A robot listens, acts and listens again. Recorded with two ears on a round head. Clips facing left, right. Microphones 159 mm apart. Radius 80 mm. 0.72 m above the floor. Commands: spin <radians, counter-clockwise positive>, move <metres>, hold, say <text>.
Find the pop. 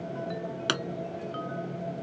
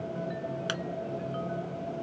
spin 1.13
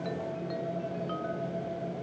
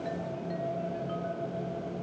hold
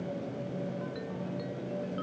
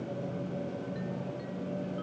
say I heard a pop, but can't make it out now. It was about straight ahead or 50° left.